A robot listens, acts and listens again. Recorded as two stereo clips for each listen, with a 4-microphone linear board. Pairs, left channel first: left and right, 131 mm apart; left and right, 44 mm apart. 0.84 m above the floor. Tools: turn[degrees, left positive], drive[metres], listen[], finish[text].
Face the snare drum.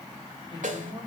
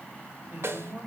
Action: turn[-90]
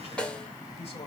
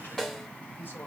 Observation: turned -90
Thought: So it is at 10° left.
Action: turn[10]
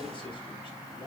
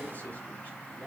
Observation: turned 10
Action: listen[]
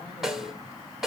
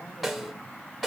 Action: finish[Found it: a snare drum, straight ahead, 1 to 2 m away.]